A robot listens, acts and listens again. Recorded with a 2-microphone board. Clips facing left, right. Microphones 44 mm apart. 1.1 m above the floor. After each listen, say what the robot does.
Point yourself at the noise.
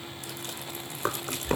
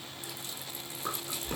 Turn 65° left.
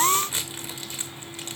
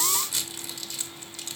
Turn 40° left.
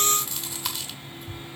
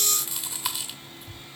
Found it: chewing, straight ahead.